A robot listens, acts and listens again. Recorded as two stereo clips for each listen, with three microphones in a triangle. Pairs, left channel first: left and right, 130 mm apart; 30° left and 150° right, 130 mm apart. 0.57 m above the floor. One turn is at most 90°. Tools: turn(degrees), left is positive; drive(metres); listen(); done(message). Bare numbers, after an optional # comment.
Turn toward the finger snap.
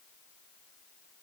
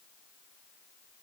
listen()
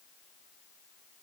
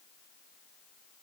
listen()
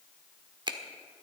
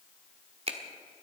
# The finger snap: 135° right.
turn(-90)
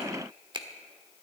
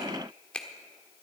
# The finger snap is now 50° right.
turn(-50)
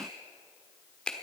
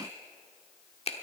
# The finger snap is now 10° left.
turn(10)
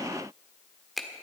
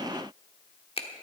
done("Found it: a finger snap, straight ahead.")